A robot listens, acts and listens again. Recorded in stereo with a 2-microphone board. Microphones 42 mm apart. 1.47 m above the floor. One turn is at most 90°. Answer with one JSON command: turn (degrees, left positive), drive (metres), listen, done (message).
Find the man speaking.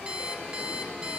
{"listen": true}
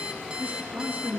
{"turn": -60}
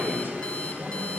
{"turn": -50}
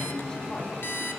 {"turn": 20}
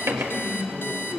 {"turn": 15}
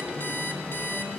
{"listen": true}
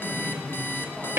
{"done": "Facing the man speaking, over 4 m away."}